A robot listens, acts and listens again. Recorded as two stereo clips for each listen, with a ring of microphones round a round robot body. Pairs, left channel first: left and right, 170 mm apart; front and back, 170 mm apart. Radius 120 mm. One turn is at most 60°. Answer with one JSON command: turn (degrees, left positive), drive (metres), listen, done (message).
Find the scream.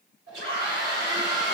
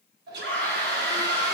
{"turn": 60}
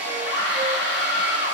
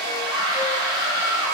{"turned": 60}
{"turn": 60}
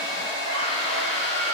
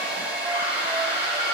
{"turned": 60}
{"turn": 35}
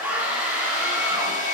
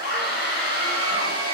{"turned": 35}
{"turn": -10}
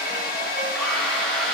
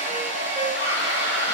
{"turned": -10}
{"listen": true}
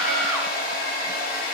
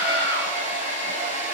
{"listen": true}
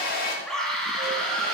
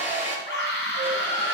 {"done": "Found it: a scream, straight ahead."}